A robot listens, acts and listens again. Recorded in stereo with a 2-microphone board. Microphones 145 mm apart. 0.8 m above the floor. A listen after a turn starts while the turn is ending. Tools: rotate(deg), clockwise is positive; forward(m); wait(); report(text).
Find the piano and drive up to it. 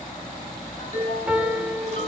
rotate(30)
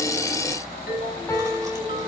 rotate(-20)
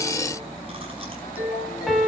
forward(1.0)
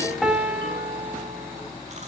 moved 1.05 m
forward(1.0)
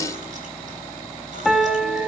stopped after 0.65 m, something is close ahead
report("Arrived at the piano, straight ahead.")